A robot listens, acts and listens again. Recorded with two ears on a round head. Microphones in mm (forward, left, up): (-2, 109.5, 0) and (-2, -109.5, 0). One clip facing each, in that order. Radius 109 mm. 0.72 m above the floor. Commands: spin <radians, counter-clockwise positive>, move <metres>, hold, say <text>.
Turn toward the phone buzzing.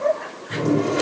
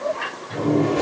hold
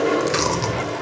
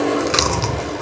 hold
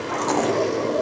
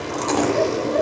say I can't make out a phone buzzing, only chewing and a toilet flushing.